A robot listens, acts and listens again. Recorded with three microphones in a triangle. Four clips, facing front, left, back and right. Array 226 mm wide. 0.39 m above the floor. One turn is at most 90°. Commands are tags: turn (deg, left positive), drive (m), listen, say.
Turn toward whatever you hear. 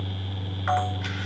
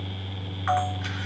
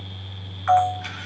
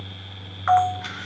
<turn deg="-35"/>
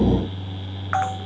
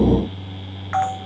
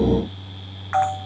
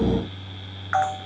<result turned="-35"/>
<turn deg="10"/>
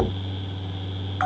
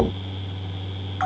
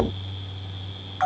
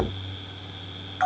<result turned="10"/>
<say>Facing the camera shutter, over 4 m away.</say>